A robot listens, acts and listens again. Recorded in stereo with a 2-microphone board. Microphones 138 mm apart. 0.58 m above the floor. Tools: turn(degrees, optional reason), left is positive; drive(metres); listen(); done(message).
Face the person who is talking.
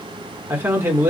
turn(degrees=-15, reason="The man speaking: about 15° right or 165° right.")
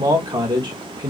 turn(degrees=-150, reason="So it is at 150° right.")
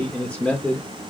turn(degrees=10, reason="The man speaking is now 10° left.")
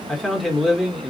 done("Found it: a man speaking, straight ahead, 1 to 2 m away.")